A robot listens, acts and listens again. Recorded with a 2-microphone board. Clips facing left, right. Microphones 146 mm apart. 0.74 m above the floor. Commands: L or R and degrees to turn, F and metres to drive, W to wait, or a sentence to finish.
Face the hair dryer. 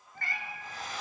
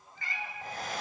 R65
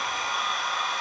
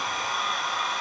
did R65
Found it: a hair dryer, straight ahead, 1 to 2 m away.